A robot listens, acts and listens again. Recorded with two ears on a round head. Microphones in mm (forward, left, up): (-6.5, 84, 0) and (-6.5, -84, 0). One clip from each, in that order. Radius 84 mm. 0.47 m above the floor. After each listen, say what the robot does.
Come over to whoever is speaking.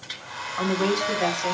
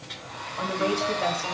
Turn 60° left.
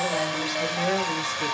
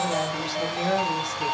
Turn 15° left.
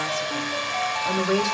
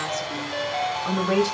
Drive 1.0 m forward.
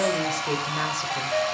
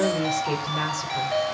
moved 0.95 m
Drive 1.0 m forward.
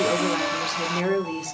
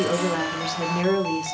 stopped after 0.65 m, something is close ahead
Arrived at the woman speaking, straight ahead.